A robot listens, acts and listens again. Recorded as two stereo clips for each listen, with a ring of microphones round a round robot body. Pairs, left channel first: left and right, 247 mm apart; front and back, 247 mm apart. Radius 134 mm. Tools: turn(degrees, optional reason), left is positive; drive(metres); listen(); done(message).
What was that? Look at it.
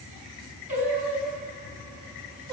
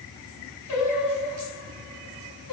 turn(degrees=-40, reason="The singing: 40° right.")
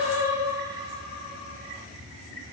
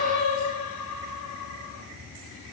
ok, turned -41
turn(degrees=-25, reason="The singing is now 25° right.")
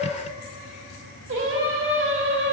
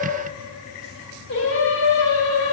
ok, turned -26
turn(degrees=-50, reason="The singing is now 50° right.")
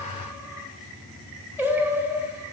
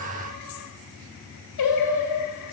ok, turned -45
done("Found it: singing, straight ahead.")